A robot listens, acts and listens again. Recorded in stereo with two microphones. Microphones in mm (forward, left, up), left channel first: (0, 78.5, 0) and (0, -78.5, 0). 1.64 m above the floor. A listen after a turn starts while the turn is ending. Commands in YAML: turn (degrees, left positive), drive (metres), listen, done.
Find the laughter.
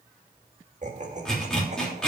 turn: -50
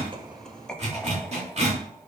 done: "Found it: laughter, straight ahead."